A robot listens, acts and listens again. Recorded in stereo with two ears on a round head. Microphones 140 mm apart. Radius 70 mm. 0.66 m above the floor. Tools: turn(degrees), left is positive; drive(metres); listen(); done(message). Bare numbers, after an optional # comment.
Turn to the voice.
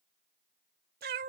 listen()
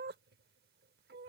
listen()
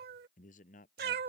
# The man speaking: about 55° left or 125° left.
turn(55)
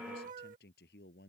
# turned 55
# So it is at 70° left.
turn(70)
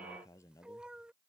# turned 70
# The man speaking is now 20° left.
turn(20)
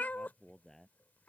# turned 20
done("Facing the man speaking.")